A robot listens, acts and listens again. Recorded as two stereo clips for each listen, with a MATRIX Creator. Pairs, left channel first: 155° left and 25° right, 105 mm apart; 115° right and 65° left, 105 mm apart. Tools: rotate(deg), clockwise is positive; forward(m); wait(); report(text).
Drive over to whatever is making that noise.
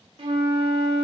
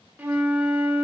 forward(1.0)
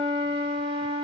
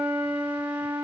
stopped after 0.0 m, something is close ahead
report("Something is in my way. I am facing the flute but have not reached it.")